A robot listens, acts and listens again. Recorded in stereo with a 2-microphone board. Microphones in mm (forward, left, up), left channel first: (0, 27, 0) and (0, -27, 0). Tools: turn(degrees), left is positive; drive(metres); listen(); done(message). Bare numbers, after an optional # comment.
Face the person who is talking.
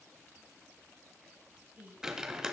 # The woman speaking: about 30° right or 150° right.
turn(-30)
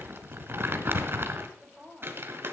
done("Found it: a woman speaking, straight ahead, 2 to 4 m away.")